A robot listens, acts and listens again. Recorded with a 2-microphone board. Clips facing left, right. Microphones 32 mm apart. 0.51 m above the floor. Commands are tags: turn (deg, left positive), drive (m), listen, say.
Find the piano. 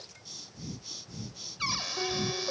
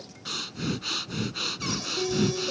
<turn deg="35"/>
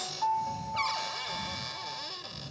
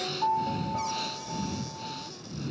<say>Found it: a piano, straight ahead.</say>